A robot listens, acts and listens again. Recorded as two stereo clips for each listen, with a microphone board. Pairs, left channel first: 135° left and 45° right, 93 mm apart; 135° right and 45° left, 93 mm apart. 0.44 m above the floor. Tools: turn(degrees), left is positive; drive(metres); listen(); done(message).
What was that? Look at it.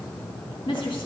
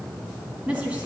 turn(degrees=115)
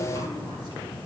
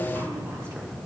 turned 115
listen()
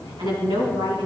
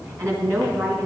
turn(degrees=-15)
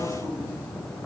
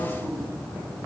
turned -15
listen()
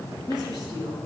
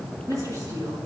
done("Facing the woman speaking, over 4 m away.")